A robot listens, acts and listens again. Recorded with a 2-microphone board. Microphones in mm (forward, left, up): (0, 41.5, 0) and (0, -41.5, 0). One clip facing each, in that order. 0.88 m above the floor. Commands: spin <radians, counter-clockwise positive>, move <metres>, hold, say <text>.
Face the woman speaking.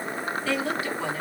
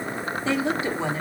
spin -0.44
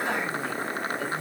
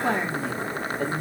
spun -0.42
spin -2.36
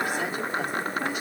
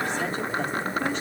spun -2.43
spin 0.17
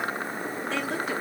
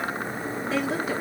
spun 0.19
say Facing the woman speaking, 1 to 2 m away.